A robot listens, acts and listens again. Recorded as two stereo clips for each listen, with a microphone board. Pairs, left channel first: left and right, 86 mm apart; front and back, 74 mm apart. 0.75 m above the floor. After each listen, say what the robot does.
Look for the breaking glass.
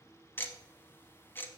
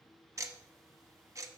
Keep listening.
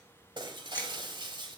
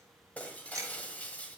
Turn 70° right.
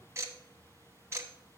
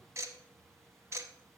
I heard breaking glass from this way, but can't make it out now.